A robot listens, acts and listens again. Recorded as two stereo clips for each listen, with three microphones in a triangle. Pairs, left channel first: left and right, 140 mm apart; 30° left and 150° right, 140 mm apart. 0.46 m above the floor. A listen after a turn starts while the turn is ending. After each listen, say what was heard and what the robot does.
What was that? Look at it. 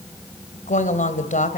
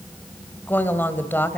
The woman speaking: 105° left. Turn 105° left.
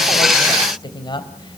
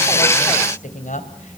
The woman speaking is now 35° left. Turn 35° left.
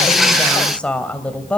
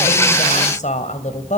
The woman speaking is now 10° left. Turn 10° left.
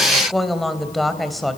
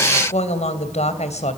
Found it: a woman speaking, straight ahead, 2 to 4 m away.